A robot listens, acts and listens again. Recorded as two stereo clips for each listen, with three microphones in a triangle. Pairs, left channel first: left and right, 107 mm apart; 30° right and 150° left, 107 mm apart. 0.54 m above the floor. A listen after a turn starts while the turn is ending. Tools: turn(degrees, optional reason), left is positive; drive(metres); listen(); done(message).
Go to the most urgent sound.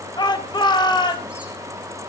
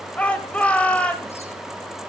turn(degrees=45, reason="The shout: 45° left.")
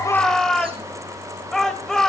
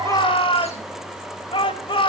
drive(metres=1.0)
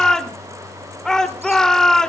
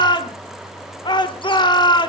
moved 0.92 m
drive(metres=1.0)
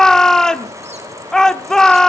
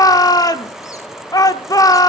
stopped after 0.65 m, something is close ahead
turn(degrees=10, reason="The shout is now 10° left.")
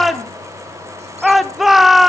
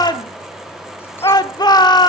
done("Arrived at the shout, straight ahead.")